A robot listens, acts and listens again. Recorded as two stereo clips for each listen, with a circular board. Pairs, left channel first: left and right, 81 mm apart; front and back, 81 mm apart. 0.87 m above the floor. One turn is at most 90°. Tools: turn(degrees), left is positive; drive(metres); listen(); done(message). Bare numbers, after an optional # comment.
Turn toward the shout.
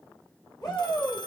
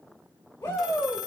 # The shout: 65° left.
turn(65)
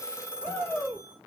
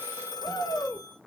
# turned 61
done("Facing the shout, 2 to 4 m away.")